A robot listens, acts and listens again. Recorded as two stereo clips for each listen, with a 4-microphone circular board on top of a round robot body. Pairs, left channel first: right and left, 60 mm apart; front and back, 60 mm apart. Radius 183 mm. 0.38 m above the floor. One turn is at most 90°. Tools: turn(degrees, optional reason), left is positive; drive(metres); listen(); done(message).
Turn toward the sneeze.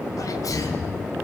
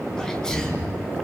turn(degrees=-75, reason="The sneeze: 75° right.")
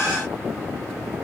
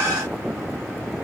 done("Facing where the sneeze came from. I can't hear it now.")